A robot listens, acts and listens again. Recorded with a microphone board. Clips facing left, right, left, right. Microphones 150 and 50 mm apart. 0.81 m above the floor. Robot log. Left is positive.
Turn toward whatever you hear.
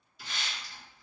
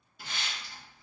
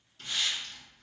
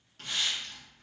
note: The hiss: about 60° right or 120° right.
cmd yaw -60
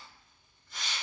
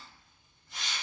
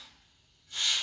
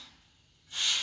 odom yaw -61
note: So it is at 30° right.
cmd yaw -30
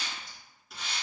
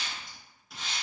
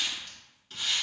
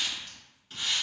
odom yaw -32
end: Facing the hiss.